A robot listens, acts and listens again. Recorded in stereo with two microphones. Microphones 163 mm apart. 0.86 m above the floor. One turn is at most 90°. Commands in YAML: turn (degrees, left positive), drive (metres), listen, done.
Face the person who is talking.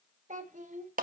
turn: -50
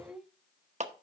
done: "Facing the child speaking."